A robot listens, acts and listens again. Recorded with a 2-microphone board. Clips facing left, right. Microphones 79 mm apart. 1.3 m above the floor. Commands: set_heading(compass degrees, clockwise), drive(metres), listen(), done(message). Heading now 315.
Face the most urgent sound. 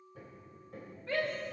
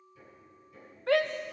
set_heading(45)
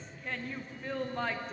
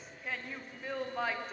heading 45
done("Found it: a shout, straight ahead.")